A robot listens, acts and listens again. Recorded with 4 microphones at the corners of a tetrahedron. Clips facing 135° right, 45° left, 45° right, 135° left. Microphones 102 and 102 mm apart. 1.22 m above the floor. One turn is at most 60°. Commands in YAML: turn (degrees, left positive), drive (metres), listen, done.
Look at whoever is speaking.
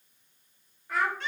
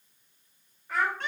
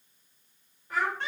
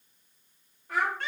turn: 60
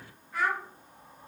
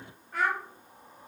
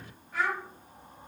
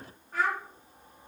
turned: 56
turn: 60
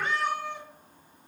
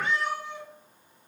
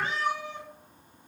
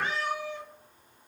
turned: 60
turn: 25
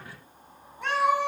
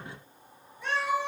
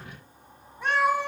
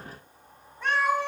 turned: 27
listen: true
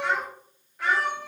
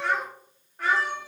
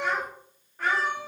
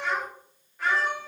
done: "Found it: a child speaking, straight ahead."